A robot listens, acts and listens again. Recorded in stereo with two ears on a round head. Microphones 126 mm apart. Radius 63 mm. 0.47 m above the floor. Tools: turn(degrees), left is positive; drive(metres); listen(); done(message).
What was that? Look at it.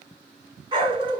turn(degrees=-35)
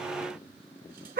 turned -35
turn(degrees=-110)
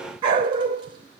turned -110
turn(degrees=-30)
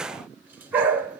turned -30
turn(degrees=-10)
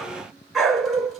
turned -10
done("Facing the dog barking.")